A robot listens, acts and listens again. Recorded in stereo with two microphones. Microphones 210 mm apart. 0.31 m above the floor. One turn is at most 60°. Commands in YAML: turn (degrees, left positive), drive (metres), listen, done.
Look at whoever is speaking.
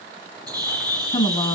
turn: 20
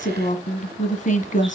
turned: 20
turn: 60
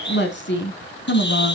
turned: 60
turn: 60
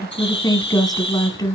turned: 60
turn: 20
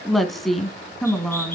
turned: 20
done: "Facing the woman speaking."